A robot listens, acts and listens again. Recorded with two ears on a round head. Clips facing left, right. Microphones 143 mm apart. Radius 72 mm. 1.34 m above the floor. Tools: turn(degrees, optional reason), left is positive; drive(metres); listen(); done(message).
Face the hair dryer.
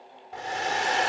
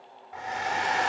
turn(degrees=40, reason="The hair dryer: about 40° left or 140° left.")
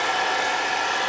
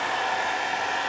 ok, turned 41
turn(degrees=100, reason="So it is at 100° left.")
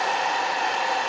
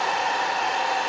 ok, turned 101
done("Found it: a hair dryer, straight ahead.")